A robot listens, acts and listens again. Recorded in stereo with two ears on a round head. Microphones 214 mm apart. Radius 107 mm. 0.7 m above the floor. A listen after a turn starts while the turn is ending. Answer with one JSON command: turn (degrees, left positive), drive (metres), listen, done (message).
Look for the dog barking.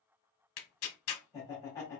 {"listen": true}
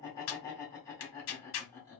{"listen": true}
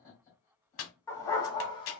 {"turn": 20}
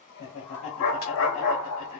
{"turn": 110}
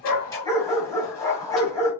{"turn": 15}
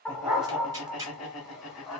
{"done": "Found it: a dog barking, straight ahead."}